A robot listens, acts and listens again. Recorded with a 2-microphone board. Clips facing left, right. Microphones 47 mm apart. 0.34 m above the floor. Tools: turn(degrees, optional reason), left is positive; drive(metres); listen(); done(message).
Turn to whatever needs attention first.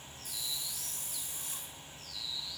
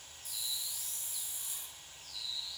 listen()
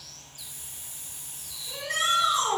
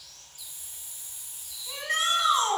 turn(degrees=-45, reason="The shout: about 45° right or 135° right.")
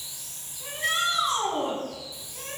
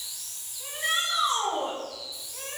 done("Facing the shout, 2 to 4 m away.")